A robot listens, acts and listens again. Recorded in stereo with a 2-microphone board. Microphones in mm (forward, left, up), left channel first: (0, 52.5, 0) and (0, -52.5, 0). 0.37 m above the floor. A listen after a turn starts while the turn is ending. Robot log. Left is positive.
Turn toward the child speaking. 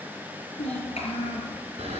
cmd yaw +90
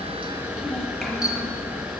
cmd idle
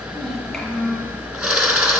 end: Facing the child speaking, over 4 m away.